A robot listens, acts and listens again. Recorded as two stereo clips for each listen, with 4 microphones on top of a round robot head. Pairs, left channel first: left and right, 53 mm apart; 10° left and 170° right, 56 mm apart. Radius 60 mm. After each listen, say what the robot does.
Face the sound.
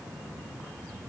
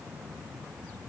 Keep listening.
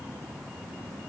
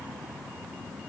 Keep listening.
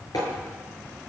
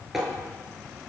Turn 105° left.
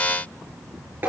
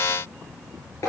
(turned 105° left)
Turn 35° right.
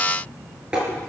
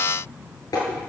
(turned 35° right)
Turn 15° right.
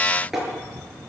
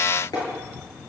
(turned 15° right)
Facing the tapping.